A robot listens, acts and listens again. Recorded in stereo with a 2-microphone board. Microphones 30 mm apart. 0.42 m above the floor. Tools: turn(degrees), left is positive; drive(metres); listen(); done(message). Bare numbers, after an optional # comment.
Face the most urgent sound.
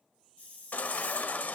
# The baby crying: about 65° left or 115° left.
turn(65)
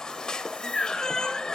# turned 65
# So it is at 25° left.
turn(25)
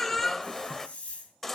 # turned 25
# The baby crying is now 10° left.
turn(10)
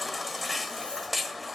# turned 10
done("Found it: a baby crying, straight ahead, under 1 m away.")